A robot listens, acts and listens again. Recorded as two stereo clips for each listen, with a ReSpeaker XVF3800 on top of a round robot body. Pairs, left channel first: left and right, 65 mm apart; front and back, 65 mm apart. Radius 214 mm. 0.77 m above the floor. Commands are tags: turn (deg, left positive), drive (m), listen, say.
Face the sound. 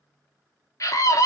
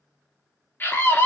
<turn deg="55"/>
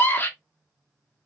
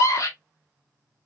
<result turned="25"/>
<turn deg="30"/>
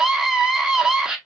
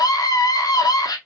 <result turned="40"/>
<turn deg="-10"/>
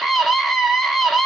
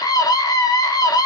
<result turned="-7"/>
<say>Facing the scream, 1 to 2 m away.</say>